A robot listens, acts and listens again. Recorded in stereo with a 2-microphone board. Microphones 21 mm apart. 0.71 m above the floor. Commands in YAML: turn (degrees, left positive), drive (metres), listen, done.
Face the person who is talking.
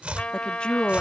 turn: 55
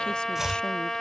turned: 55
listen: true
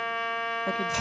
listen: true
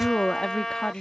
turn: 55
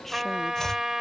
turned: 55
listen: true
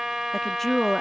turn: 15
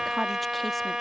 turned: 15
listen: true
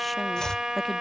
listen: true
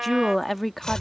done: "Facing the woman speaking."